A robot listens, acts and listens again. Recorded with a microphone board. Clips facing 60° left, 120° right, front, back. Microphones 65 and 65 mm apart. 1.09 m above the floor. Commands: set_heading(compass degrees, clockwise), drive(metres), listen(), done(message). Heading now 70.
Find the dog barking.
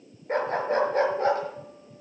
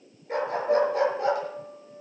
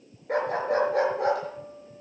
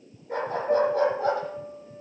done("Facing the dog barking.")